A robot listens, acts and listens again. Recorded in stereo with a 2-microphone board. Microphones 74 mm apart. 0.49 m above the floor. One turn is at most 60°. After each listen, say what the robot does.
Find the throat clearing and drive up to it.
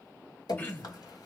Turn 25° left.
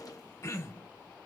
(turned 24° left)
Turn 60° left.
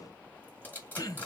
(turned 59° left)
Turn 60° left.
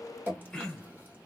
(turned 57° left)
Turn 10° left.
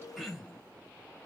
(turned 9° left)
Drive 1.0 m forward.
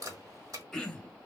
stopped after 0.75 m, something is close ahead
Arrived at the throat clearing, straight ahead.